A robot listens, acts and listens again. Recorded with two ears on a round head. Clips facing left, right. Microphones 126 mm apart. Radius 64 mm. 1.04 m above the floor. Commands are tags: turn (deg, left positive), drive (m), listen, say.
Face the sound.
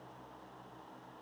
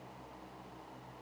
<listen/>
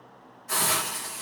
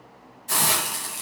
<turn deg="-30"/>
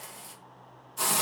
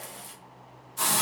<say>Found it: a hiss, straight ahead, under 1 m away.</say>